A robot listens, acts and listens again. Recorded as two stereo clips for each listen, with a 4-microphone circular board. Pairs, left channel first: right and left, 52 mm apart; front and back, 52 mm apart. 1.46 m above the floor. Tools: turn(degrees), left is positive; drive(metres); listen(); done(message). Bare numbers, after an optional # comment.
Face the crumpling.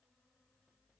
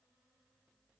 listen()
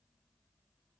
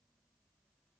listen()
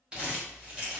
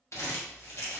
# The crumpling: 25° left.
turn(25)
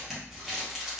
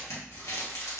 # The crumpling is now 10° left.
turn(10)
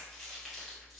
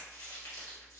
done("Found it: crumpling, straight ahead, 1 to 2 m away.")